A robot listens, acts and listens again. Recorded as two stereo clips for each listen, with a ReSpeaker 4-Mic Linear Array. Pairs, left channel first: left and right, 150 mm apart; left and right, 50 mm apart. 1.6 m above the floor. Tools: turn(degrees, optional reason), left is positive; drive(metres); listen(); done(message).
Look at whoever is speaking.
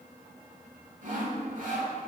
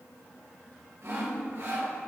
listen()
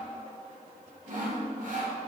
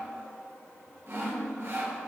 listen()
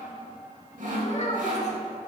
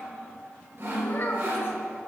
turn(degrees=50, reason="The child speaking: about 50° left or 130° left.")
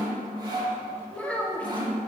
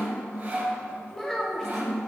turn(degrees=10, reason="So it is at 10° left.")
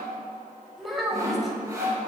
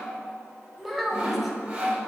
done("Found it: a child speaking, straight ahead, 1 to 2 m away.")